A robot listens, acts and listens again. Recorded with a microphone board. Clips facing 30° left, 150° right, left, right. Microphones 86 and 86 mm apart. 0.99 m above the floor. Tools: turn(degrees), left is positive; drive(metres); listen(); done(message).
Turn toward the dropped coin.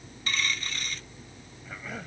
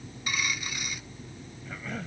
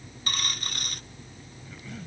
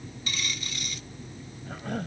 turn(degrees=130)
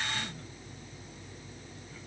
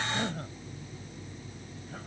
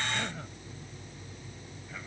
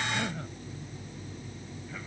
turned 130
done("Facing where the dropped coin came from. I can't hear it now.")